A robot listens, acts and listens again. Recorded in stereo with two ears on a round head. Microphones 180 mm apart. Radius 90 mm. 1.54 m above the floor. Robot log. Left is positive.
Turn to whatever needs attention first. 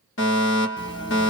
note: The fire alarm: about 70° left or 110° left.
cmd yaw +70
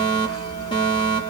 note: So it is at 25° left.
cmd yaw +25
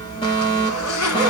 note: The fire alarm is now 25° left.
cmd yaw +25
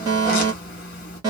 note: The fire alarm is now 20° right.
cmd yaw -20
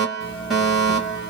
end: Facing the fire alarm.